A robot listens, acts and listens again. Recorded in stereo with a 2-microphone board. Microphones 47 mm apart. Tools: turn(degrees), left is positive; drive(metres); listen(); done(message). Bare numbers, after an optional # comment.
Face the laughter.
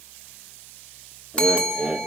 # The laughter: about 20° right or 160° right.
turn(-20)
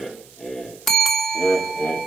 # So it is at 35° left.
turn(35)
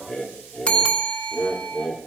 # The laughter is now 35° left.
turn(35)
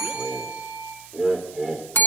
done("Facing the laughter, 2 to 4 m away.")